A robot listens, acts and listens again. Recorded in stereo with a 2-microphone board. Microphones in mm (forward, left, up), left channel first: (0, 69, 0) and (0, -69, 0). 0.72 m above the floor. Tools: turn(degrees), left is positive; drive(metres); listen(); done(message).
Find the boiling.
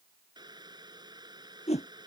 turn(degrees=-30)
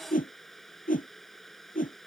done("Facing the boiling.")